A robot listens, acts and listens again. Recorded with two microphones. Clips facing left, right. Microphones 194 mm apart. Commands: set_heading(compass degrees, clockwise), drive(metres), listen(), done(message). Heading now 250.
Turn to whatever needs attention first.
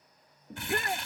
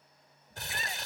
set_heading(190)
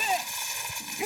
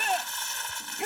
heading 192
done("Facing the shout.")